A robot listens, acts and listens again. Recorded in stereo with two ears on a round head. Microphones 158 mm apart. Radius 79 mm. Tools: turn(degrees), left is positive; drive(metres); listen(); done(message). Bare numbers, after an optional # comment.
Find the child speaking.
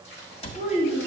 # The child speaking: about 45° left or 135° left.
turn(45)
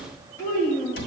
# So it is at 20° left.
turn(20)
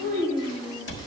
# The child speaking is now 15° left.
turn(15)
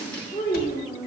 done("Found it: a child speaking, straight ahead.")